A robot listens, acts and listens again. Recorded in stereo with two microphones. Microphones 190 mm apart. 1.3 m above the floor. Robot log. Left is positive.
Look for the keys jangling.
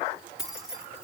cmd yaw -30
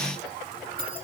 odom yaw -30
note: So it is at 130° right.
cmd yaw -130
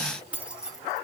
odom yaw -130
end: Found it: keys jangling, straight ahead, 1 to 2 m away.